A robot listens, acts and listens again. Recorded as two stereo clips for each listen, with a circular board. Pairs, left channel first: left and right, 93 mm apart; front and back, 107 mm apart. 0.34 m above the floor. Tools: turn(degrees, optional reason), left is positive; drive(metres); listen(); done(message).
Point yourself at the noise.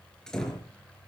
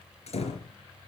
done("Facing the door slam.")